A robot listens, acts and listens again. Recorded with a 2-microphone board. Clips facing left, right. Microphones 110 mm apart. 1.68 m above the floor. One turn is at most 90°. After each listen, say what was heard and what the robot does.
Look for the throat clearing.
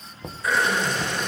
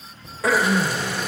Turn 90° right.
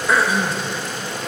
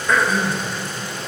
So it is at 10° left. Turn 10° left.
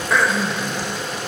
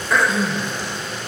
Found it: throat clearing, straight ahead, 2 to 4 m away.